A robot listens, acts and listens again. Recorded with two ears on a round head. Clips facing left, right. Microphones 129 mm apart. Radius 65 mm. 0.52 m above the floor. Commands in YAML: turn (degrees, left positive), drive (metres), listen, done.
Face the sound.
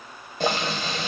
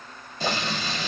turn: 45
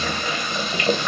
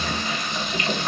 turn: 80
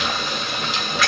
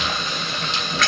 done: "Found it: boiling, straight ahead."